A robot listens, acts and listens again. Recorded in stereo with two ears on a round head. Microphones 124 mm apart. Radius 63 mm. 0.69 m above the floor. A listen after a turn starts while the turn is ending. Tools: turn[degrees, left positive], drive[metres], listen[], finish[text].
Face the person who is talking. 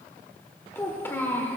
Thought: The child speaking: about 15° left or 165° left.
Action: turn[15]
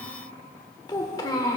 Thought: So it is at 150° left.
Action: turn[150]
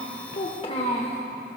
Thought: The child speaking is now 40° left.
Action: turn[40]
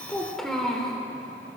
Action: finish[Facing the child speaking.]